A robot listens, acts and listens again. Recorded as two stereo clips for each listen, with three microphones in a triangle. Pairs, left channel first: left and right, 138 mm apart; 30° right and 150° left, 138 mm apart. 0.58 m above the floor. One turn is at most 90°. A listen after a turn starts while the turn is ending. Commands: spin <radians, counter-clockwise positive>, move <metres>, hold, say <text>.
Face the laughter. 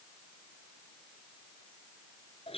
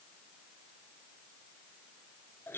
hold
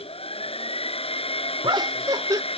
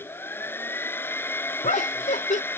spin -0.52
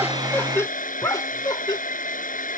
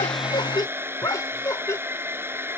spin 0.61
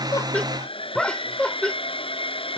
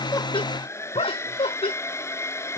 spin 0.17
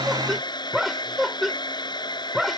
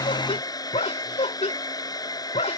say Facing the laughter.